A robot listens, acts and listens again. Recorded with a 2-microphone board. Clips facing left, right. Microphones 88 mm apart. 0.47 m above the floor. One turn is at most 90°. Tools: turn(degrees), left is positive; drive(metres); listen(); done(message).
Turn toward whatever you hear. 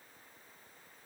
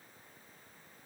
listen()
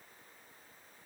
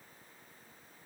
listen()
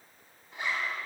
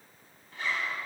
turn(degrees=20)
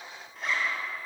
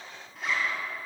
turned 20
done("Facing the zipper.")